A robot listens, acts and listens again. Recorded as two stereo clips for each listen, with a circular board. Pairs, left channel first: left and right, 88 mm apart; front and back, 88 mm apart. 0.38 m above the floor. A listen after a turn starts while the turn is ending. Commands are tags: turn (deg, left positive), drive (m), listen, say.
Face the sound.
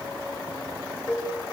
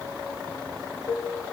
<turn deg="30"/>
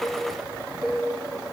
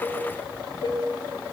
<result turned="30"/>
<say>Found it: dishes clattering, straight ahead.</say>